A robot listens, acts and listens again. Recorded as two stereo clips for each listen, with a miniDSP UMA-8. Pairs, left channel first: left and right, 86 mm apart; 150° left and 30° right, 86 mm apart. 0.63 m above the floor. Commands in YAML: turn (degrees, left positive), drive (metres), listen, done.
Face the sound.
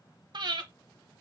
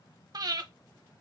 turn: -65
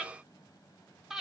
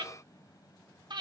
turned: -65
done: "Facing the breathing."